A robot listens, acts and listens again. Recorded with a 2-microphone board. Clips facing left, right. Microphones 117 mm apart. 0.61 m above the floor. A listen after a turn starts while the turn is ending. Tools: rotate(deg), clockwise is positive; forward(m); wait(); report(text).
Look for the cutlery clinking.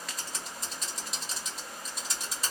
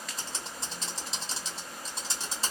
wait()
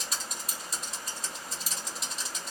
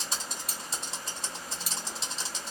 rotate(60)
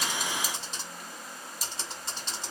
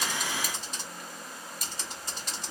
wait()
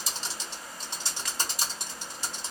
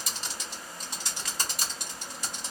rotate(60)
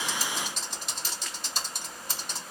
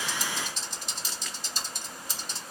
wait()
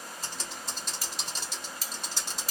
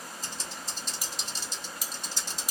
rotate(15)
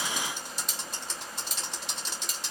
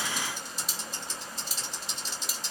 report("Facing the cutlery clinking.")